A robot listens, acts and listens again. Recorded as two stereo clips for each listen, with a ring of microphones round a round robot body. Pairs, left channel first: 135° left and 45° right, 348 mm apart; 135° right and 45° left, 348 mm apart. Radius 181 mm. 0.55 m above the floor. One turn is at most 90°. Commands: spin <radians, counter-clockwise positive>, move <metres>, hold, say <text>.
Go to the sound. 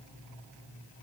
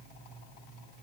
hold
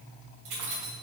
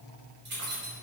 spin -0.26
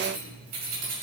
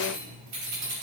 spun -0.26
move 1.0
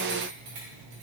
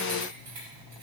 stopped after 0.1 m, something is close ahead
say Something is in my way. I am facing the keys jangling but have not reached it.